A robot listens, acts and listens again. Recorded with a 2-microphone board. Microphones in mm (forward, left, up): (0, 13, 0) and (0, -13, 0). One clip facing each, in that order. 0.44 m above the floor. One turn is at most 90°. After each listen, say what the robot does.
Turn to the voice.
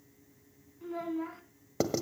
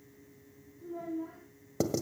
Turn 90° left.
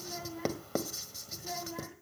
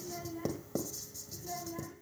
Turn 20° left.
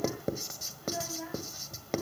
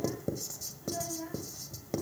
Turn 20° left.
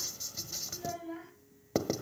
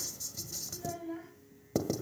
Turn 10° left.
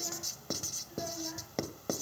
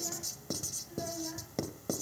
Found it: a child speaking, straight ahead, 2 to 4 m away.